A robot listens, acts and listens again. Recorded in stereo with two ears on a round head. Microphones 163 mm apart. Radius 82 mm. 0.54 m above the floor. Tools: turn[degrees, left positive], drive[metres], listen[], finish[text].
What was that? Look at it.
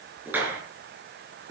Action: turn[-30]
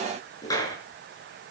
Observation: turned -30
Thought: So it is at 20° left.
Action: turn[20]
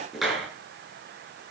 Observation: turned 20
Action: finish[Found it: a clap, straight ahead.]